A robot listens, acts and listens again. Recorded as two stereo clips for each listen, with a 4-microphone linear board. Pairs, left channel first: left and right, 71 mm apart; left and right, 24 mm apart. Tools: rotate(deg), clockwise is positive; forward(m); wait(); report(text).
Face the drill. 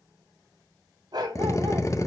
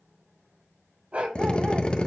rotate(-45)
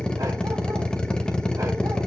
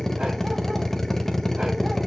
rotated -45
rotate(-15)
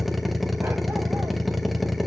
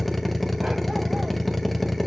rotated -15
report("Found it: a drill, straight ahead.")